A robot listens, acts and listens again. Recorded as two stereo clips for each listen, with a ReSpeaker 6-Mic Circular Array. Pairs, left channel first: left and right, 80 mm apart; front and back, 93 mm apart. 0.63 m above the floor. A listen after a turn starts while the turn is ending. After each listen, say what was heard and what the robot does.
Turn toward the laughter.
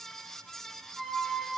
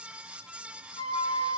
Keep listening.
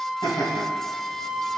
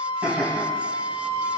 The laughter: 110° left. Turn 110° left.
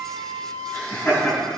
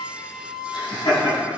The laughter is now 30° left. Turn 30° left.
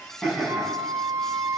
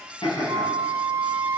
Found it: laughter, straight ahead, over 4 m away.